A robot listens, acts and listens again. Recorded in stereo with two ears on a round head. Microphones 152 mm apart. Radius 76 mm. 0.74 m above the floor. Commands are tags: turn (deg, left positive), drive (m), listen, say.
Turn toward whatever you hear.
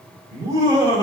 <turn deg="-25"/>
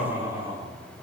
<turn deg="-20"/>
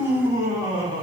<turn deg="-25"/>
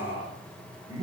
<turn deg="-20"/>
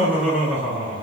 <turn deg="-10"/>
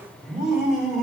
<say>Facing the laughter, 2 to 4 m away.</say>